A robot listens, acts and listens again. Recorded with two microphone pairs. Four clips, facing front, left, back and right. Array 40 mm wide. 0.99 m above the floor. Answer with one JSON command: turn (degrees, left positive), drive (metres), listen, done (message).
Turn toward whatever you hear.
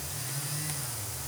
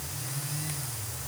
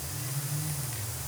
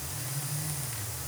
{"listen": true}
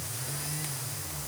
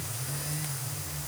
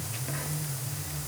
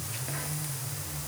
{"listen": true}
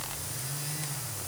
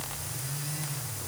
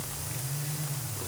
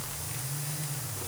{"done": "I can't make out anything."}